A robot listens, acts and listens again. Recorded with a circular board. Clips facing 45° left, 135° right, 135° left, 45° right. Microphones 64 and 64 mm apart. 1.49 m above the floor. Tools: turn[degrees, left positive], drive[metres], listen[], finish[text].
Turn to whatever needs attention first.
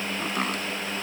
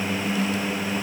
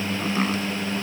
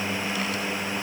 Action: listen[]
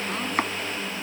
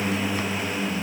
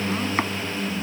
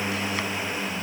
Action: listen[]
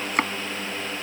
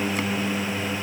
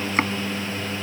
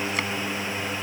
Action: finish[I can't make out anything urgent.]